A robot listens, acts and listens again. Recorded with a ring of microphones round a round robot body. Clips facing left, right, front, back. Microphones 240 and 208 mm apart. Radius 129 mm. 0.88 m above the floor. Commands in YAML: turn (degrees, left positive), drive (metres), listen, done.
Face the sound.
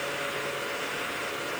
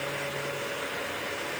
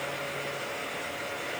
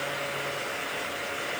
listen: true
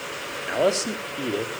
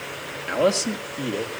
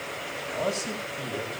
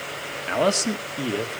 turn: 175
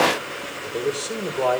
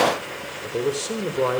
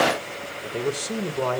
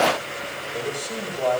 turn: -25
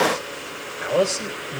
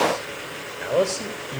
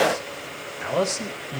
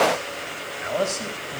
done: "Found it: a man speaking, straight ahead."